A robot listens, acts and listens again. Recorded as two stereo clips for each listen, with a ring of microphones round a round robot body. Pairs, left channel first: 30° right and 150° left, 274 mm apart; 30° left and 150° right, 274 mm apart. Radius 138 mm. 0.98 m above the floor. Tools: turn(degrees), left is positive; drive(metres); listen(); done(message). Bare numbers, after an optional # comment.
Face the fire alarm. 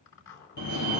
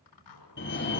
# The fire alarm: 20° right.
turn(-20)
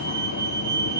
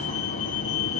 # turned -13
# The fire alarm is now 10° right.
turn(-10)
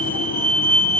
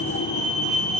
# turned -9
done("Facing the fire alarm, 2 to 4 m away.")